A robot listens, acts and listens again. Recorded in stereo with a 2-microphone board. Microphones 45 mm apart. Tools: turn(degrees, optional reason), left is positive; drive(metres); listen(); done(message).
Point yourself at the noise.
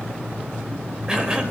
turn(degrees=-20, reason="The cough: about 20° right or 160° right.")
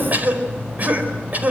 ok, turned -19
turn(degrees=-140, reason="So it is at 140° right.")
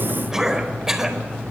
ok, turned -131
turn(degrees=-10, reason="The cough is now 10° right.")
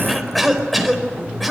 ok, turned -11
done("Facing the cough.")